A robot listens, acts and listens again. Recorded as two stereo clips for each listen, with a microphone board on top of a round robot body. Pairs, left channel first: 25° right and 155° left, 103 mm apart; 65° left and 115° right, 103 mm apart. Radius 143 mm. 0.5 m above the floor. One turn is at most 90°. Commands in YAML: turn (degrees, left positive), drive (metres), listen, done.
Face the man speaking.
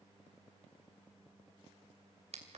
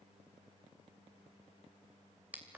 listen: true
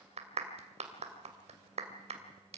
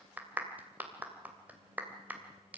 listen: true
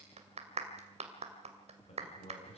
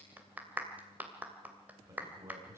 turn: -45
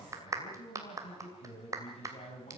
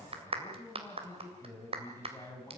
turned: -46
done: "Facing the man speaking, over 4 m away."